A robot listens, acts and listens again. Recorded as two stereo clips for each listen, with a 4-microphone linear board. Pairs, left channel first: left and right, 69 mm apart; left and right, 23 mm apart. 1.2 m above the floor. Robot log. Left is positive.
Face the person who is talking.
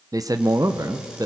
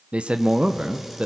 note: The man speaking: about 55° right or 125° right.
cmd yaw -55
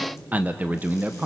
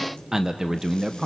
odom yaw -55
note: So it is at 30° right.
cmd yaw -30
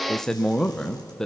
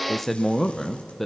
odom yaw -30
note: The man speaking is now 10° left.
cmd yaw +10
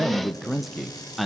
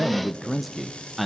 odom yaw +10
end: Found it: a man speaking, straight ahead, under 1 m away.